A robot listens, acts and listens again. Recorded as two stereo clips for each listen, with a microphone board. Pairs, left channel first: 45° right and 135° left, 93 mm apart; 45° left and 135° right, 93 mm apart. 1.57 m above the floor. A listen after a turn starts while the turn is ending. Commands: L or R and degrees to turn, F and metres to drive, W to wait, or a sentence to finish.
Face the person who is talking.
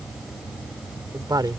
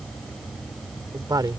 L180
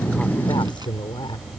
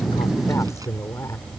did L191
R10
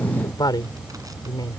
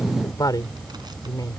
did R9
Facing the woman speaking.